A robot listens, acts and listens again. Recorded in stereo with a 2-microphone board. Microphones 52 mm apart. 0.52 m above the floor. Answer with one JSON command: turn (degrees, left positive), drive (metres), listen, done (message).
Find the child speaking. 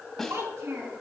{"turn": -70}
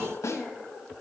{"listen": true}
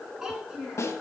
{"turn": -10}
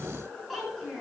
{"done": "Found it: a child speaking, straight ahead, over 4 m away."}